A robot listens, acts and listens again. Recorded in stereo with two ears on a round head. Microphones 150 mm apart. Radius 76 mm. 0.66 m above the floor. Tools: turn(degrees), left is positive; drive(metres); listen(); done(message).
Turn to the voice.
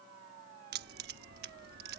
listen()
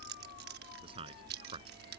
turn(degrees=-35)
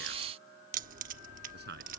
turn(degrees=-110)
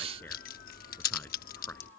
listen()
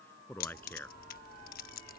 turn(degrees=10)
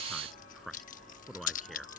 done("Facing the man speaking.")